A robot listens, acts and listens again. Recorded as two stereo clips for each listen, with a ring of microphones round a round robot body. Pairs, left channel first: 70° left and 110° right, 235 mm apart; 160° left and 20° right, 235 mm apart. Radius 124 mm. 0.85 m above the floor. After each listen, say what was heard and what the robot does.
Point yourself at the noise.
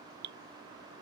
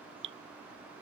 The dripping: 65° right. Turn 65° right.
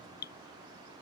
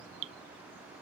The dripping is now 15° left. Turn 15° left.
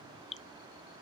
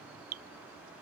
Facing the dripping.